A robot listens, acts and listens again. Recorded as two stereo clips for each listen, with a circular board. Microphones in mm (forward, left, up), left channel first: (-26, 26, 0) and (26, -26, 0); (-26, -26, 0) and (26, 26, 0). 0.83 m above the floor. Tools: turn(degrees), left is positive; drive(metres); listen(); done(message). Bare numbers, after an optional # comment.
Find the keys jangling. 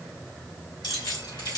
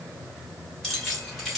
# The keys jangling: 130° left.
turn(130)
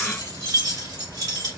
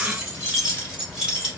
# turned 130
# The keys jangling is now 35° right.
turn(-35)
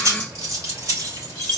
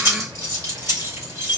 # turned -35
done("Facing the keys jangling, 2 to 4 m away.")